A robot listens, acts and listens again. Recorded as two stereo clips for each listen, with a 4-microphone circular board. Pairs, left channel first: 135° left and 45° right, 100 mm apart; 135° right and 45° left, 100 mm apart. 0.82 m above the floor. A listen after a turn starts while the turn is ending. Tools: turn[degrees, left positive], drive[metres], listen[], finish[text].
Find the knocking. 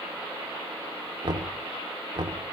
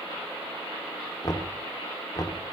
Thought: The knocking: 85° right.
Action: turn[-85]
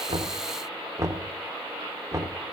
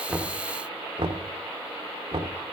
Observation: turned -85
Thought: The knocking is now 15° left.
Action: turn[15]
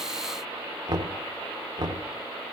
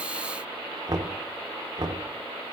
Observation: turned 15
Action: finish[Found it: knocking, straight ahead, 2 to 4 m away.]